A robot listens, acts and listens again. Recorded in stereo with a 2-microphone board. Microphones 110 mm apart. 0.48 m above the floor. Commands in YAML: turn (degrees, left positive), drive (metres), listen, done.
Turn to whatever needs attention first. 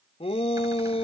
turn: 65
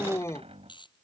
turn: 30
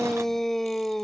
done: "Facing the shout."